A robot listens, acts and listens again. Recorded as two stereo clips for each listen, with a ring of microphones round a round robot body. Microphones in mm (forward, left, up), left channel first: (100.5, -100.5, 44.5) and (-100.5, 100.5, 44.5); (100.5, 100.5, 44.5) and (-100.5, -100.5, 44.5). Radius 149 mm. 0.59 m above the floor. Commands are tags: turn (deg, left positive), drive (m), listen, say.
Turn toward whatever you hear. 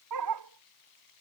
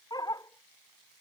<turn deg="120"/>
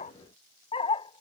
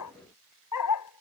<turn deg="25"/>
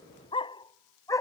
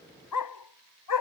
<turn deg="35"/>
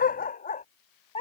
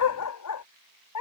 <turn deg="25"/>
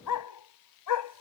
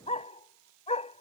<turn deg="-25"/>
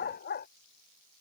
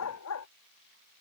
<turn deg="10"/>
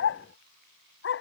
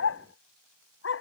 <say>Facing the dog barking.</say>